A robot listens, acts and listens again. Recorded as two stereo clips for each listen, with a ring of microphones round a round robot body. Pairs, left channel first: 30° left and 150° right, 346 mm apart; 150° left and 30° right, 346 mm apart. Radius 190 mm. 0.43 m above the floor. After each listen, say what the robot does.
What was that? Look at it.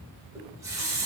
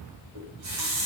Turn 70° right.
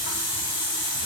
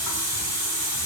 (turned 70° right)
Turn 15° left.
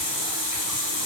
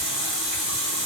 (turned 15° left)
Found it: a running tap, straight ahead, 1 to 2 m away.